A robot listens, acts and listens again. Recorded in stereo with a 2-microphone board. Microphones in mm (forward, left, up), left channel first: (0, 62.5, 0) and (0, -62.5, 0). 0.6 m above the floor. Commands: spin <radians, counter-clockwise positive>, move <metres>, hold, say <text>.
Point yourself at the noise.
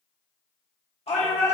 spin 1.05
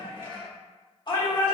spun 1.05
spin 0.79
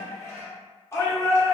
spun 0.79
spin 0.44
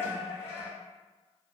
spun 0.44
spin 0.44
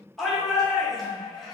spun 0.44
say Found it: a shout, straight ahead.